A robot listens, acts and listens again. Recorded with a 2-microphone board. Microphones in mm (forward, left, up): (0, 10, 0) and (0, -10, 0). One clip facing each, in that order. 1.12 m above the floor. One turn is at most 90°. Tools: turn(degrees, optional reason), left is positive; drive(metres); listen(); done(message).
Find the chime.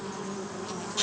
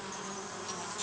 listen()
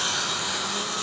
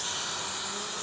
listen()
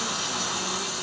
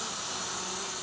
done("I can't make out a chime, only a hiss.")